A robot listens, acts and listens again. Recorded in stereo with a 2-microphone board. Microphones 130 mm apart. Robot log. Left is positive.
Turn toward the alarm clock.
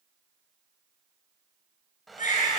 cmd idle
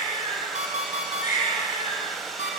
note: The alarm clock: about 65° right or 115° right.
cmd yaw -65
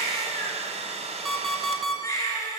end: Facing the alarm clock.